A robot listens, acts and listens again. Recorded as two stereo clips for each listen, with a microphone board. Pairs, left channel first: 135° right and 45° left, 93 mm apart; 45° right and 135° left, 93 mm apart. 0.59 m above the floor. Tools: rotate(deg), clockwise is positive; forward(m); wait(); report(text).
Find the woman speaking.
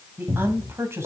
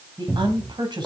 rotate(-105)
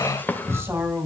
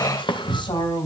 rotate(20)
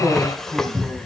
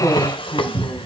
report("Facing the woman speaking, 2 to 4 m away.")